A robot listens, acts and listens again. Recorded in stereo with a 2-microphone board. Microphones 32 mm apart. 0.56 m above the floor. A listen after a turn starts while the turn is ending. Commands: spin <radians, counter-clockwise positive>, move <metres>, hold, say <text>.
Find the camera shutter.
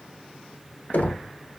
hold
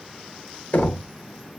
hold
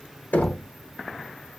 say I can't make out a camera shutter, only knocking.